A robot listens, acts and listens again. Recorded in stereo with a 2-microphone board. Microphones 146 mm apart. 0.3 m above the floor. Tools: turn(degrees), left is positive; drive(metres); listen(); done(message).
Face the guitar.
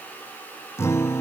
turn(degrees=15)
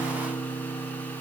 turn(degrees=145)
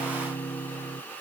turn(degrees=35)
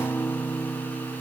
turn(degrees=15)
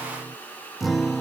done("Found it: a guitar, straight ahead.")